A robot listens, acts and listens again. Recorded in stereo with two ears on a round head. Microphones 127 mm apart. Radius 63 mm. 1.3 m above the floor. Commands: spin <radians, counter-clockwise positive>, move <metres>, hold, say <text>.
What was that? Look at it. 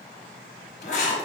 spin 0.96
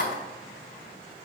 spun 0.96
spin 1.22
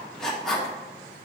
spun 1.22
say Found it: writing, straight ahead.